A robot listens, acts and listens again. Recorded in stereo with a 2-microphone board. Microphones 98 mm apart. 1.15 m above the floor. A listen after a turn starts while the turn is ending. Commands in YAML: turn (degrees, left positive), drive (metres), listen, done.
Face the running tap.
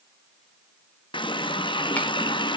turn: 55
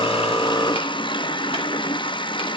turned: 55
turn: 65
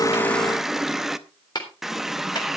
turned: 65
done: "Found it: a running tap, straight ahead."